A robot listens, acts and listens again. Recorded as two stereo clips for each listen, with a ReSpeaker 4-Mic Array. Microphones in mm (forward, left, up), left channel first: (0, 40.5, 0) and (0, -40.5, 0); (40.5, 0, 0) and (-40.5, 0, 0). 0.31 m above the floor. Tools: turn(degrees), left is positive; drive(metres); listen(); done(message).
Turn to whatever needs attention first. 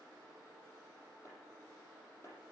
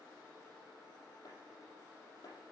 listen()
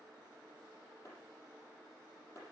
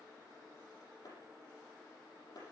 listen()
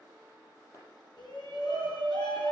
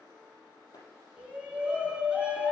turn(degrees=105)
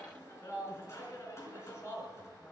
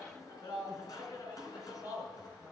turn(degrees=40)
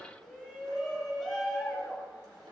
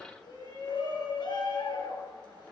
done("Found it: a shout, straight ahead, 2 to 4 m away.")